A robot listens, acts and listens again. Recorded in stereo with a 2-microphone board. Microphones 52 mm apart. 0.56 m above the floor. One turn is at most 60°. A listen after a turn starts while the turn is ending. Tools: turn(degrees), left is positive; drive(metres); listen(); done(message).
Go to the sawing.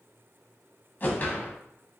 listen()
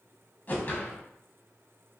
listen()
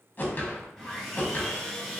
turn(degrees=30)
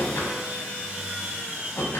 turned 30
turn(degrees=-25)
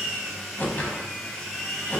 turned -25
drive(metres=1.0)
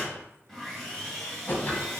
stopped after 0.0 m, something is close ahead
done("Something is in my way. I am facing the sawing but have not reached it.")